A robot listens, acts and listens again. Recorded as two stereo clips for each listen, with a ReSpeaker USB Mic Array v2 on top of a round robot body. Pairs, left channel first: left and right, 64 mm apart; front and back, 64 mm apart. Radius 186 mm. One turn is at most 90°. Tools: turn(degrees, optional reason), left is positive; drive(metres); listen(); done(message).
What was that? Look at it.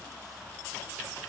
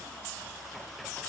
listen()
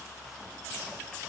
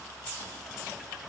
listen()
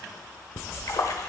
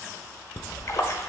turn(degrees=50, reason="The splash: 50° left.")
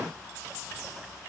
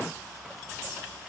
done("I heard a splash from this way, but can't make it out now.")